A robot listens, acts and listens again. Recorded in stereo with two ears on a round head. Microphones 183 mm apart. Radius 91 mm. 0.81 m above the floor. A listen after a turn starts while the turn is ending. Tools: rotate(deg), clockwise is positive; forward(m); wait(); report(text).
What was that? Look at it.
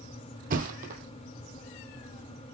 rotate(45)
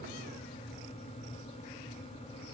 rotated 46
wait()
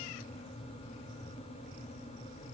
report("I heard a thud, but can't make it out now. It was about 5° left or 90° right.")